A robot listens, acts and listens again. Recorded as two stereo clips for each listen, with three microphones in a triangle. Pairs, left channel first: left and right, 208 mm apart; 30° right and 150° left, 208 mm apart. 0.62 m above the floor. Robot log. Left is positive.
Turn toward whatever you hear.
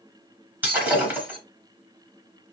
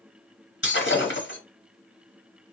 note: The breaking glass: 10° right.
cmd yaw -10
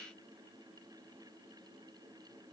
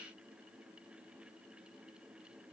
end: I heard breaking glass from this way, but can't make it out now.